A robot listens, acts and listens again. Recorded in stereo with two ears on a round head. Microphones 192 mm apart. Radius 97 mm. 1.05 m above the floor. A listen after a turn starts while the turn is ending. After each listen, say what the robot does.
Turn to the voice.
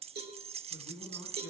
Turn 65° right.
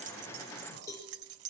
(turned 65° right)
Keep listening.
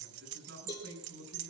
Turn 50° right.
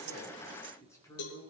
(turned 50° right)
Turn 15° left.
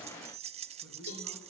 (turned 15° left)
Keep listening.
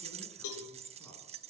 Keep listening.
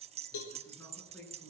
Turn 10° left.
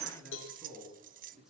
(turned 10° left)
Found it: a man speaking, straight ahead.